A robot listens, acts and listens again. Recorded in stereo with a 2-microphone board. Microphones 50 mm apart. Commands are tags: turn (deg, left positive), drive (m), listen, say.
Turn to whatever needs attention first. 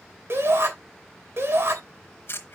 <turn deg="-55"/>
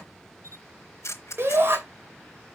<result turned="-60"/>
<turn deg="-55"/>
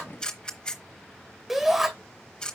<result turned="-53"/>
<say>Found it: a shout, straight ahead, 2 to 4 m away.</say>